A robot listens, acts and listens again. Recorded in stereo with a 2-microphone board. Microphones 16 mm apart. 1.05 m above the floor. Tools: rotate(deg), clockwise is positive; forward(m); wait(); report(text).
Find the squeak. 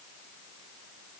wait()
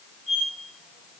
rotate(30)
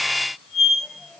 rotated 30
rotate(-20)
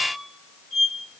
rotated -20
report("Found it: a squeak, straight ahead.")